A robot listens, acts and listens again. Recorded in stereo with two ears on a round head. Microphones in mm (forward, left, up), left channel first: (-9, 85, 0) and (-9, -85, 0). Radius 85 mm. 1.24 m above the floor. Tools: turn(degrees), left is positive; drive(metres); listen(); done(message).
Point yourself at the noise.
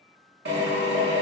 turn(degrees=-60)
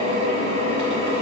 turn(degrees=-35)
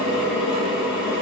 done("Found it: a drill, straight ahead.")